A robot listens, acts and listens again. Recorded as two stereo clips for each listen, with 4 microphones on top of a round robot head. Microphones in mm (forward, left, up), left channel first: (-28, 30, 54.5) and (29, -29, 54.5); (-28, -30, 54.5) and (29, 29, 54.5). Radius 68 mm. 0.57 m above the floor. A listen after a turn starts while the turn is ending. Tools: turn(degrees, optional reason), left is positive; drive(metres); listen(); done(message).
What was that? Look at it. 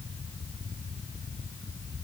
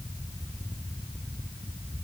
listen()
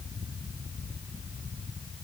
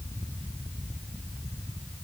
listen()
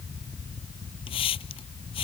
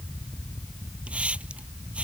turn(degrees=125, reason="The hiss: 125° left.")
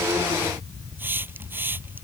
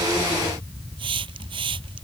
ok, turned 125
turn(degrees=25, reason="The hiss is now 25° left.")
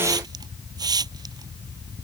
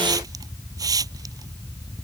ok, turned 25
done("Facing the hiss.")